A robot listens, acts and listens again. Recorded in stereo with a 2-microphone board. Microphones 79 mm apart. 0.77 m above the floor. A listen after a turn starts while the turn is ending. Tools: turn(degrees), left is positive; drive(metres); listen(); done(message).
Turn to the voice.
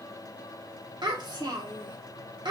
turn(degrees=-70)
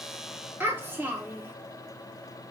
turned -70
turn(degrees=-30)
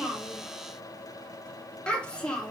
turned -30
turn(degrees=15)
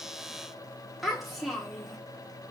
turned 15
done("Facing the child speaking, 1 to 2 m away.")